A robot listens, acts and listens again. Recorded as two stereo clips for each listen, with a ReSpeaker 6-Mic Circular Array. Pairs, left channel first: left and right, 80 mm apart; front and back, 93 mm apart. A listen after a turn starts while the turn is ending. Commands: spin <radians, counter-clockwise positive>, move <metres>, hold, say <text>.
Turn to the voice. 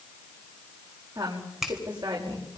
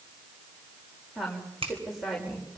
spin -1.57
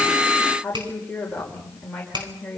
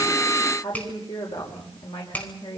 spin 0.17
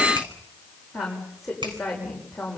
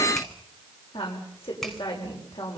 say Found it: a woman speaking, straight ahead.